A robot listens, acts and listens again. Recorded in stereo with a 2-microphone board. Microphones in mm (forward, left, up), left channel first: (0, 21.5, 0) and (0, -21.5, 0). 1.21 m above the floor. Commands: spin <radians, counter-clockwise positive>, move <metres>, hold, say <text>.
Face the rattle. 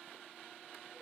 hold
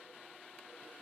hold
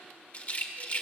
spin 0.61
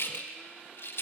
spin 1.83
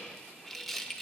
say Facing the rattle, 1 to 2 m away.